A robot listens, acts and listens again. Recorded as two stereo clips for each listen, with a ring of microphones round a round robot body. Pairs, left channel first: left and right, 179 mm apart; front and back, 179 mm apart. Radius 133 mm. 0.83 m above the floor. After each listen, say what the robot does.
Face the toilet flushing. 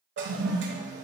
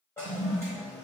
Turn 80° right.
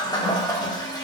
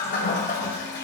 Turn 25° left.
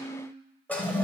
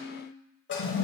Turn 10° left.
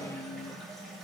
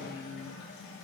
Keep listening.
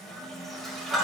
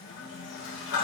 Found it: a toilet flushing, straight ahead, 1 to 2 m away.